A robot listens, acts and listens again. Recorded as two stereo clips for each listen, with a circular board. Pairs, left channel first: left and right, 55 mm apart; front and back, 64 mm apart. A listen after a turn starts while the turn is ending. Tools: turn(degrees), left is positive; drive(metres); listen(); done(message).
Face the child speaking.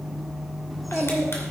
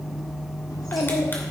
done("Found it: a child speaking, straight ahead, 1 to 2 m away.")